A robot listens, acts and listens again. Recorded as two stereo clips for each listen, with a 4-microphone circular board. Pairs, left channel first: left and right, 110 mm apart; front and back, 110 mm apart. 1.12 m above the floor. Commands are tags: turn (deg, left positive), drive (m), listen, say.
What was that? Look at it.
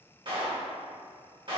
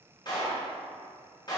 <turn deg="-50"/>
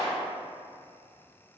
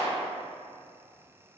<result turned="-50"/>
<turn deg="30"/>
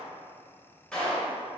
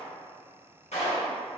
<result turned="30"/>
<say>Found it: a clap, straight ahead.</say>